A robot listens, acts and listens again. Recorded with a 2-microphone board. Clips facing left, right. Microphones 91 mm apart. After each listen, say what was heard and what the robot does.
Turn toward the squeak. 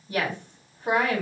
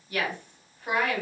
Keep listening.
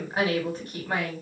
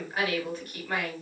Keep listening.
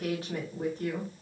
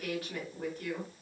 I can't make out a squeak to turn to.